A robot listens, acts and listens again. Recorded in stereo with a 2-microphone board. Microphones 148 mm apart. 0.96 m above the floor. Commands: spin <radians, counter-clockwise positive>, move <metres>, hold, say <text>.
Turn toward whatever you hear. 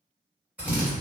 spin -0.52
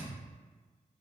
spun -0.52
hold
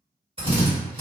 spin -2.44
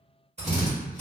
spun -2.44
spin -0.87
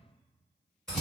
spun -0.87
say Found it: a drill, straight ahead.